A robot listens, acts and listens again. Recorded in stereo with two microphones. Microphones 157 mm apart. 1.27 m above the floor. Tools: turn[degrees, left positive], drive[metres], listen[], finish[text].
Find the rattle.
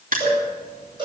Action: listen[]
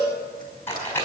Action: turn[30]
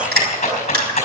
Thought: So it is at 135° left.
Action: turn[135]
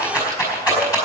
Thought: The rattle is now 20° left.
Action: turn[20]
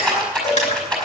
Action: finish[Facing the rattle.]